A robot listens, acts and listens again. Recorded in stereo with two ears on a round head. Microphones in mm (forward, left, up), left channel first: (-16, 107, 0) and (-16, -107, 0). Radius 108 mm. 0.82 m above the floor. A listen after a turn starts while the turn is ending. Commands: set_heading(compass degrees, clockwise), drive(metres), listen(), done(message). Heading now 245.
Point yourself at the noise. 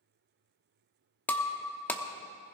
set_heading(215)
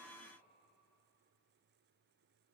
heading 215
listen()
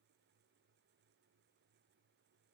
done("I heard breaking glass, but can't make it out now. It was about 25° right or 145° left.")